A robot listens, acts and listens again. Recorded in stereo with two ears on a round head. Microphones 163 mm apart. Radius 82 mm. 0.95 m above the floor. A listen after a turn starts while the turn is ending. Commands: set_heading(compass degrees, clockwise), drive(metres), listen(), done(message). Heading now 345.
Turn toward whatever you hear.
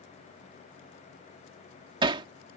set_heading(10)
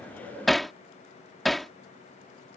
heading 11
done("Facing the hammering.")